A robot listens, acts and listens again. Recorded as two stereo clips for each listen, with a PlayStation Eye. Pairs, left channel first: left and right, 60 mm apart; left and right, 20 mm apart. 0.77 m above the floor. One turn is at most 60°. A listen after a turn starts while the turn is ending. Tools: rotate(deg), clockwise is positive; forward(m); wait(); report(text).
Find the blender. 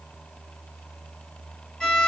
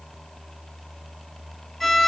wait()
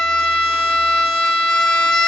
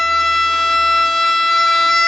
wait()
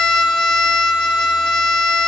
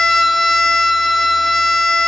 report("I can't make out a blender, only a violin.")